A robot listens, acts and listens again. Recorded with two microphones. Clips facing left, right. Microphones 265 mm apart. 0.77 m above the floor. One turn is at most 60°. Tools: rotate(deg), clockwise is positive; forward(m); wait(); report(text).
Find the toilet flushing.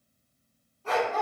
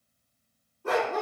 wait()
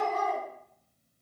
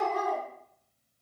wait()
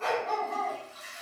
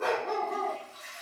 rotate(-30)
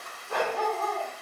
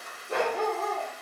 rotate(20)
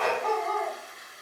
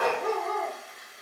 report("Facing the toilet flushing.")